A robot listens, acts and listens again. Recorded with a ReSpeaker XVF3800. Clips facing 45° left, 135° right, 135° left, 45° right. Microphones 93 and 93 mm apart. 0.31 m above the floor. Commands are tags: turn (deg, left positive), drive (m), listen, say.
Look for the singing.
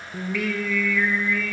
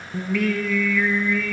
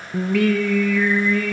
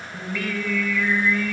<turn deg="135"/>
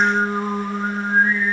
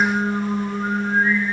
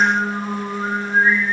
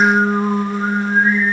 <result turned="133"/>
<say>Found it: singing, straight ahead.</say>